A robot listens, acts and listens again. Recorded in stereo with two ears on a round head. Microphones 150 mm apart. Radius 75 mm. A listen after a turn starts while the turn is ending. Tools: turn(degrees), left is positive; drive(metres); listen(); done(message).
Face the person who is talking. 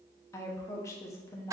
turn(degrees=15)
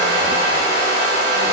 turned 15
listen()
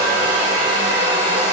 listen()
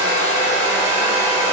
done("I heard a woman speaking, but can't make it out now. It was about straight ahead or 150° left.")